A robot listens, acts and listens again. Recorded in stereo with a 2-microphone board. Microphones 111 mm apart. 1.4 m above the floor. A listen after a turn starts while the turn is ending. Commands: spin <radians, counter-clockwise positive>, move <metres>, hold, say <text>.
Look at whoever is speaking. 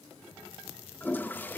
hold
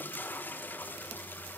hold
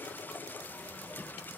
say I can't make out anyone speaking, only a toilet flushing.